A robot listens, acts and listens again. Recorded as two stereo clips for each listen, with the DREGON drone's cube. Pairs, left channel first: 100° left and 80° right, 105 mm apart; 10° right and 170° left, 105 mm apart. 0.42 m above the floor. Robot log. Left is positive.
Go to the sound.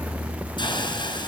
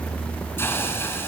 note: The hiss: 55° left.
cmd yaw +55
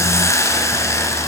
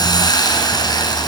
note: The hiss is now 40° left.
cmd yaw +40
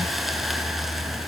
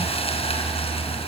note: The hiss is now 10° left.
cmd yaw +10
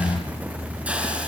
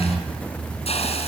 cmd fwd 1.0
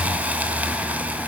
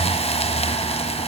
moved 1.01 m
cmd fwd 1.0
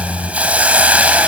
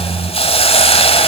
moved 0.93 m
cmd fwd 1.0
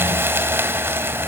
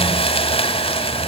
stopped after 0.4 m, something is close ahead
note: The hiss is now 15° right.
cmd yaw -15
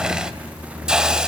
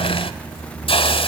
end: I am next to the hiss.